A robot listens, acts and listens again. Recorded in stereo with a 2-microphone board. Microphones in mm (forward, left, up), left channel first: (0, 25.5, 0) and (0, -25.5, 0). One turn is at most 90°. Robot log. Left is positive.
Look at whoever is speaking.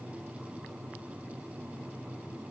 cmd idle
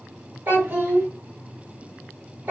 note: The child speaking: about 40° right or 140° right.
cmd yaw -40
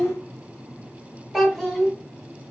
end: Found it: a child speaking, straight ahead, 1 to 2 m away.